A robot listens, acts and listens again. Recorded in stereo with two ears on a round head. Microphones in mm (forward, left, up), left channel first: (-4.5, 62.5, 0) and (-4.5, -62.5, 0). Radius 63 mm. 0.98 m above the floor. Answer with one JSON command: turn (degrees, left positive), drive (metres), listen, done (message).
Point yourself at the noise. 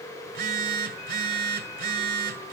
{"turn": -70}
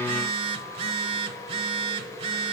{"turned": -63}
{"turn": -45}
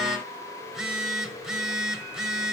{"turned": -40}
{"done": "Found it: a phone buzzing, straight ahead."}